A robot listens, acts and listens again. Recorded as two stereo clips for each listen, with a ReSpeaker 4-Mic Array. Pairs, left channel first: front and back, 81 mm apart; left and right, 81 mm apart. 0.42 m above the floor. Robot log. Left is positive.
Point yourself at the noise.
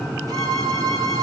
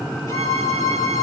note: The violin: 140° left.
cmd yaw +140
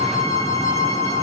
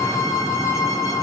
note: The violin is now 40° left.
cmd yaw +40
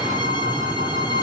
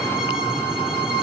note: The violin is now 10° right.
cmd yaw -10
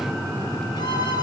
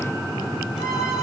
cmd idle
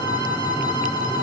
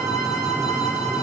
end: Found it: a violin, straight ahead, 2 to 4 m away.